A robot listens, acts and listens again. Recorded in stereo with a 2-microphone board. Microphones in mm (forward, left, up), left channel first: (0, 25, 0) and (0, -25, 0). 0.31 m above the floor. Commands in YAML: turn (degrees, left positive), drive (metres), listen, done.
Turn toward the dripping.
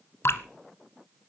turn: 60
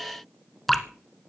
done: "Facing the dripping, under 1 m away."